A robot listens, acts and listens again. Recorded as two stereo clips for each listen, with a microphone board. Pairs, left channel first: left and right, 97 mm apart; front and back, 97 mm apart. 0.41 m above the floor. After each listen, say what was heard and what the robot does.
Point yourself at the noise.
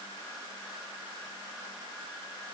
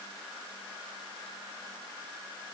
Keep listening.
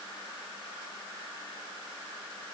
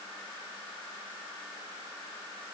Keep listening.
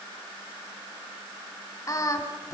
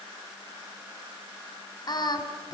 The singing: 35° left. Turn 35° left.
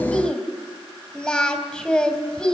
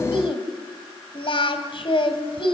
The singing is now 10° left. Turn 10° left.
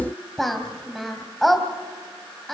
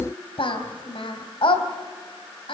Found it: singing, straight ahead, 2 to 4 m away.